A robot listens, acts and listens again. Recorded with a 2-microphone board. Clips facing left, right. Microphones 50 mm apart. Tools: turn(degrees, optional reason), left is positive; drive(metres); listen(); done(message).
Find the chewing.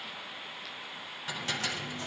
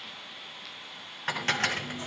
turn(degrees=-25, reason="The chewing: about 25° right or 155° right.")
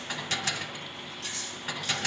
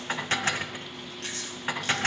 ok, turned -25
turn(degrees=-130, reason="So it is at 130° right.")
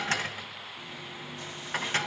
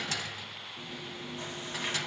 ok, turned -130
turn(degrees=-35, reason="The chewing is now 35° right.")
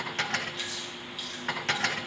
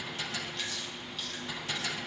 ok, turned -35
done("Facing the chewing.")